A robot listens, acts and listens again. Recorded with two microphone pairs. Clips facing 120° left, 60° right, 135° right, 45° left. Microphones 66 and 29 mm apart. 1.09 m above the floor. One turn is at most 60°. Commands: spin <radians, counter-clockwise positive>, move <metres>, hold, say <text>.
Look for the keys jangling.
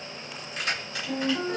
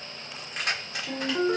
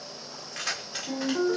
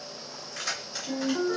spin -1.05
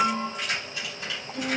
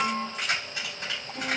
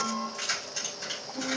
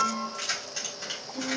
spin -0.52
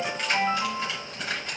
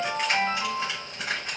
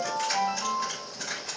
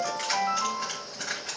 say Found it: keys jangling, straight ahead.